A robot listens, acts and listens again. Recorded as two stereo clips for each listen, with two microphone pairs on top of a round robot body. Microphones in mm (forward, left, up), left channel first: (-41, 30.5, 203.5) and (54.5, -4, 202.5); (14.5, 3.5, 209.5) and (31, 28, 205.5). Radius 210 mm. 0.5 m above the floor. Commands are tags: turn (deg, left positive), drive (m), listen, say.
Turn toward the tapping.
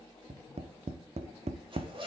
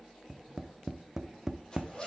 <turn deg="-15"/>
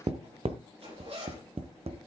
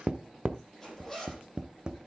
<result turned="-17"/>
<say>Found it: tapping, straight ahead.</say>